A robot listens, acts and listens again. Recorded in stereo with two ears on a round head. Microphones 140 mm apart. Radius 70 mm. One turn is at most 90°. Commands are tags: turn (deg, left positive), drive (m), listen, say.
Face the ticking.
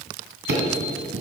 <turn deg="-75"/>
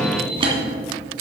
<turn deg="-35"/>
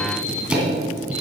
<say>Facing the ticking, 2 to 4 m away.</say>